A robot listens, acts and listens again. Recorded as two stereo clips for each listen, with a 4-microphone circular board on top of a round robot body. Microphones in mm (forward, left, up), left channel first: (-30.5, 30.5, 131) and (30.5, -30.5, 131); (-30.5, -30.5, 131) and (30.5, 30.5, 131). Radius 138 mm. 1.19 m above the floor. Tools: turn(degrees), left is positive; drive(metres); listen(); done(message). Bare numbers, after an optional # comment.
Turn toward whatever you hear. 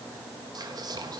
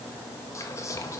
# The whispering: 80° right.
turn(-80)
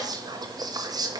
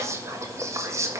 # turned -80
# The whispering is now 10° right.
turn(-10)
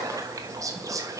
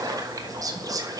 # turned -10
done("Found it: whispering, straight ahead, 1 to 2 m away.")